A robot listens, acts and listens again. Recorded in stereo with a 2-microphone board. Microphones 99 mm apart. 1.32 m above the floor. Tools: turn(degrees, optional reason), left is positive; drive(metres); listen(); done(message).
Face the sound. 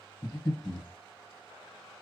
turn(degrees=30, reason="The breathing: about 30° left or 150° left.")
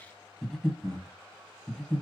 done("Facing the breathing, 1 to 2 m away.")